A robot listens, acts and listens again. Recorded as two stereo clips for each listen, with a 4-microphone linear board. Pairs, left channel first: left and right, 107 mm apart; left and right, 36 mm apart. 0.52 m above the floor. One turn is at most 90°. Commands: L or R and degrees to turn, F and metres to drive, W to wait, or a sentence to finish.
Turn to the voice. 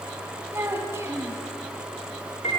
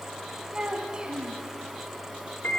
R25
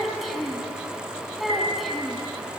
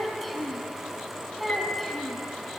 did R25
Facing the child speaking.